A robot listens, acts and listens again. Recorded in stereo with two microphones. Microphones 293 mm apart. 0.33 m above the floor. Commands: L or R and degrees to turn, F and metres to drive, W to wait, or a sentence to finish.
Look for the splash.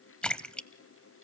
L30
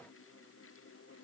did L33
W
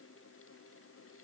I heard a splash, but can't make it out now. It was about 30° right or 145° left.